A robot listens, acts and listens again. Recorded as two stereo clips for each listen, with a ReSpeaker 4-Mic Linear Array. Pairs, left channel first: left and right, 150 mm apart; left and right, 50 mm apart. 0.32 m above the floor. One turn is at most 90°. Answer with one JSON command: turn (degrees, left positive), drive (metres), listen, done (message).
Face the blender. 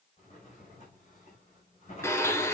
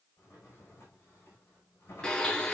{"turn": 20}
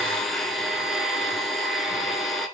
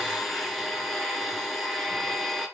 {"done": "Facing the blender."}